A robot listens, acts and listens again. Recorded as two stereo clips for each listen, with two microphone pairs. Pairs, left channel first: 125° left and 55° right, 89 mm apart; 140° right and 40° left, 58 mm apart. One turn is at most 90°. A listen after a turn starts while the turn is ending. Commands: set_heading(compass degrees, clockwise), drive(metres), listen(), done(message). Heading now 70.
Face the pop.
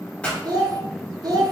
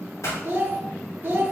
set_heading(160)
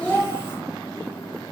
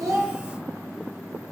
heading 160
set_heading(225)
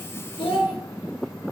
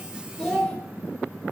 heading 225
done("I heard a pop from this way, but can't make it out now.")